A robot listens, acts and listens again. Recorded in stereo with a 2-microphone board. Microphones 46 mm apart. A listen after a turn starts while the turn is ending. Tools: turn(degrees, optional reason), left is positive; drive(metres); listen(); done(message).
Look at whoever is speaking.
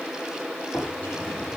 listen()
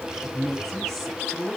turn(degrees=30)
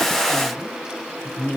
turn(degrees=140, reason="So it is at 140° left.")
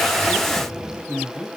turn(degrees=40, reason="The woman speaking is now 40° left.")
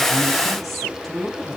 done("Found it: a woman speaking, straight ahead, 2 to 4 m away.")